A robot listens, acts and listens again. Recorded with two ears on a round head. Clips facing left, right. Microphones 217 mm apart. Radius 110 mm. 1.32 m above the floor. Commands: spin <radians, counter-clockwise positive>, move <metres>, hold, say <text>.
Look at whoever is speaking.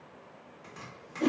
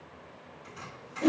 hold
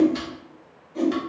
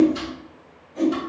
hold
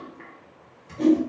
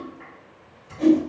say I can't make out anyone speaking, only a whoosh and chopping.